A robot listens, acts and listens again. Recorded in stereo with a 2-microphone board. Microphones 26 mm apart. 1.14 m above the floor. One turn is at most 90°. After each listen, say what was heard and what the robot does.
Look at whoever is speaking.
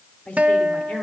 The woman speaking: about 70° left or 110° left. Turn 70° left.
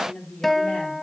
So it is at 40° left. Turn 40° left.
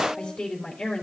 The woman speaking is now 25° left. Turn 25° left.
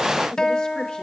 Keep listening.
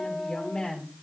The woman speaking is now 20° left. Turn 20° left.
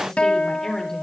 Found it: a woman speaking, straight ahead, over 4 m away.